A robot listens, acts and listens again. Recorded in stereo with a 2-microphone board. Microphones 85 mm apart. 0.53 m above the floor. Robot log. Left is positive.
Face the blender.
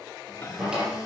note: The blender: about 45° left or 135° left.
cmd yaw +45
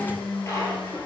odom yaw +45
note: So it is at 85° left.
cmd yaw +85
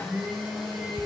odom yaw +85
end: Found it: a blender, straight ahead, 2 to 4 m away.